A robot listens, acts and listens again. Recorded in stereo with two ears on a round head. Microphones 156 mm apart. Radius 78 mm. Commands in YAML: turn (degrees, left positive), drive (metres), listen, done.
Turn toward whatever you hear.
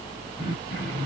turn: 25
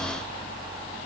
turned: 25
listen: true
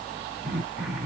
done: "Facing the throat clearing, 1 to 2 m away."